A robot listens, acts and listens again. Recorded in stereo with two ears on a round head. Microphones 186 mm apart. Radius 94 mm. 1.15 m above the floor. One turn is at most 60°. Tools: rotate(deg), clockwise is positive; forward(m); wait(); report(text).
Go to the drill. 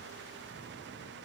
wait()
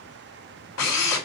rotate(-60)
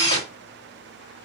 rotate(-25)
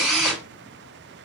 forward(1.0)
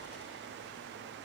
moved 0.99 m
wait()
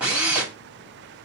forward(1.0)
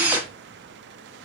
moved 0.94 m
rotate(10)
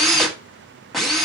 forward(1.0)
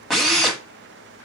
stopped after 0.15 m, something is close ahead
report("Arrived at the drill, straight ahead.")